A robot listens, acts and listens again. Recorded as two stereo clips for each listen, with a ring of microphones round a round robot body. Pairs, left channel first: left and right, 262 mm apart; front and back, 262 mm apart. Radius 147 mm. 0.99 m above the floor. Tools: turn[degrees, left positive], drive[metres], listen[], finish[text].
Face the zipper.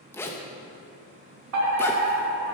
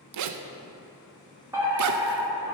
Thought: The zipper: 170° left.
Action: turn[170]
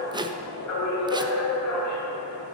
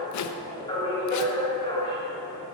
Thought: The zipper is now 15° right.
Action: turn[-15]
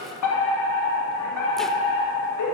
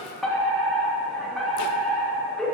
Action: listen[]
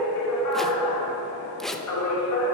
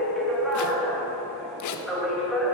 Action: finish[Facing the zipper, under 1 m away.]